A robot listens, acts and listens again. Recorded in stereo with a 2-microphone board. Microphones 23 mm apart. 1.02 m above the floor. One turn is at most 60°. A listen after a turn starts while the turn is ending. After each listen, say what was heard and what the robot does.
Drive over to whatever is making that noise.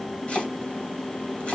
The chopping: about 60° left or 120° left. Turn 60° left.
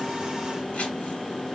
Keep listening.
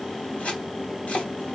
So it is at 60° left. Turn 60° left.
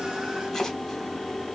Keep listening.
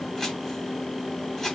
The chopping is now 10° left. Turn 10° left.
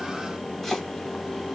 Drive 1.0 m forward.
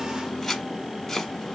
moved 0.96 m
Drive 1.0 m forward.
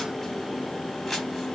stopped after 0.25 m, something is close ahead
I am next to the chopping.